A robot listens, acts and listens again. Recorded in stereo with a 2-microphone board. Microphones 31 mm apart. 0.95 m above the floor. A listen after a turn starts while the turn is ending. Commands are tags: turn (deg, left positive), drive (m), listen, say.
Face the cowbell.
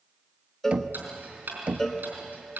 <turn deg="30"/>
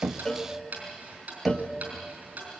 <listen/>
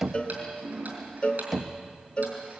<turn deg="130"/>
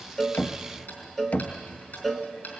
<turn deg="10"/>
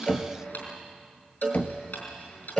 <say>Found it: a cowbell, straight ahead.</say>